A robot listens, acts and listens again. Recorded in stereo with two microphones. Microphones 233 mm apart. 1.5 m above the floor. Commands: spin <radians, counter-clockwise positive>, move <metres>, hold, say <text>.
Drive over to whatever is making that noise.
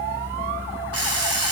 spin -1.22
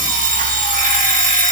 spin -0.61
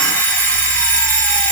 move 1.0
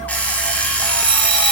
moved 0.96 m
move 1.0
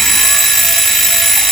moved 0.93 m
move 1.0
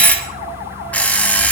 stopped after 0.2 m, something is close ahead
say I am next to the alarm clock.